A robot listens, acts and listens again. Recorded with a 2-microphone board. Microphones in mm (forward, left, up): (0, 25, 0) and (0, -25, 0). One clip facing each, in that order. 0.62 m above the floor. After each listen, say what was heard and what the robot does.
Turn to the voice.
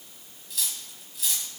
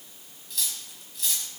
Keep listening.
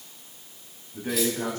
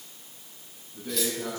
The man speaking: about 60° left or 120° left. Turn 60° left.
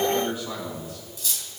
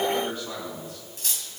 Found it: a man speaking, straight ahead, over 4 m away.